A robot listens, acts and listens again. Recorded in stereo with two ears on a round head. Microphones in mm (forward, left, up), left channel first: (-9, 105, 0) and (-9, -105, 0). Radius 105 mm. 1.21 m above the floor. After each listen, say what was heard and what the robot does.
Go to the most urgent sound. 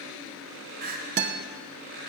The crying: about 40° right or 140° right. Turn 40° right.
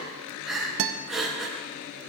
Drive 1.0 m forward.
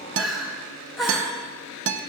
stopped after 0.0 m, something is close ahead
Blocked. The crying is further on, straight ahead.